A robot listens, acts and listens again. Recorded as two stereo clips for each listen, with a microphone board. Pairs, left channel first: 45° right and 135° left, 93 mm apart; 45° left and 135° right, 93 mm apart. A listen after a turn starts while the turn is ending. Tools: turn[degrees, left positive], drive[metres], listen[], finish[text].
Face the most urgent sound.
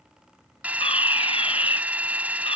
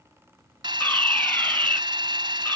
Thought: The fire alarm: 30° right.
Action: turn[-30]
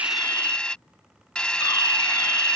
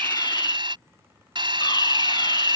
Action: finish[Found it: a fire alarm, straight ahead.]